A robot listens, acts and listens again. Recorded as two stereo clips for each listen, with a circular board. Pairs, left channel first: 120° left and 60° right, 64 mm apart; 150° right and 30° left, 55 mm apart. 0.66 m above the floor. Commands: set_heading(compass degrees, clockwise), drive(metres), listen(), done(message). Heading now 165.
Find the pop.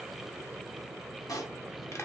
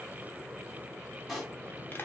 set_heading(45)
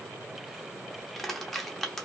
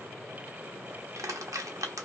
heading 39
set_heading(49)
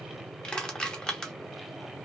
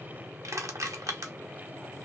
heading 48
done("Facing where the pop came from. I can't hear it now.")